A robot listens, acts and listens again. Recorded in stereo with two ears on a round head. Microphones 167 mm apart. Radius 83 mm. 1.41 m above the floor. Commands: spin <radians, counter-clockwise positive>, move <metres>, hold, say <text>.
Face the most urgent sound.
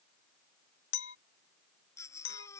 spin 0.26
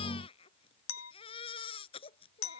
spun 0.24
spin 2.62
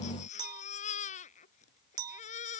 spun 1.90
spin 0.70
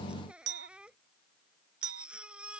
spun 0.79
say Found it: a baby crying, straight ahead.